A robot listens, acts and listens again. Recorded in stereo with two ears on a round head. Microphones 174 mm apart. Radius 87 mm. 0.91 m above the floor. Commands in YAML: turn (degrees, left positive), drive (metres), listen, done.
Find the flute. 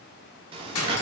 listen: true
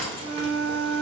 turn: -70
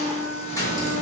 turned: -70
turn: -25
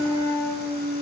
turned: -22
done: "Found it: a flute, straight ahead, 1 to 2 m away."